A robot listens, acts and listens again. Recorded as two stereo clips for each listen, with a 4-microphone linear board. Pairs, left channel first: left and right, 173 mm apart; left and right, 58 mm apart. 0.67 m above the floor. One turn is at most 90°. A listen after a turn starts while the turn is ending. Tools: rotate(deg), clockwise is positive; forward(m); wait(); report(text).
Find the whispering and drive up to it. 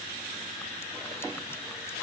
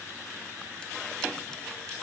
wait()
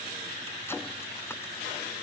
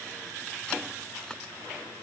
wait()
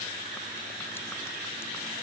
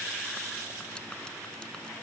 report("I can't make out whispering.")